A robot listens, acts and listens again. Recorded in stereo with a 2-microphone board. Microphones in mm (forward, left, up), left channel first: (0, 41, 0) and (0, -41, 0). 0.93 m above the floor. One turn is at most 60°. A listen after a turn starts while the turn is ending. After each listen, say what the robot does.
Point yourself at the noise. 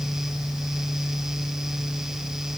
Keep listening.
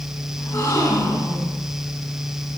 Turn 35° left.
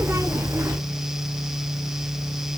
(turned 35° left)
Keep listening.
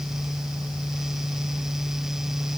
I heard a gasp, but can't make it out now. It was about straight ahead or 110° left.